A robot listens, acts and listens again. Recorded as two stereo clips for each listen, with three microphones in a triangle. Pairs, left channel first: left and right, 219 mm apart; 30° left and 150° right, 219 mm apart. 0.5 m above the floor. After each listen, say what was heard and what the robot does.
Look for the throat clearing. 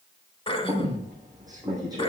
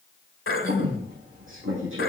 The throat clearing: 30° left. Turn 30° left.
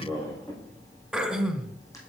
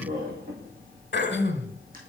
Found it: throat clearing, straight ahead.